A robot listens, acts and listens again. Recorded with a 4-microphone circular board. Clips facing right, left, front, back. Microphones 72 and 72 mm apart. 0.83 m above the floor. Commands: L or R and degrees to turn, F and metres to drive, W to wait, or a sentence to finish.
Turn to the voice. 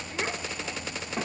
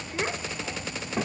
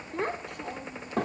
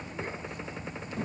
Facing the child speaking, 1 to 2 m away.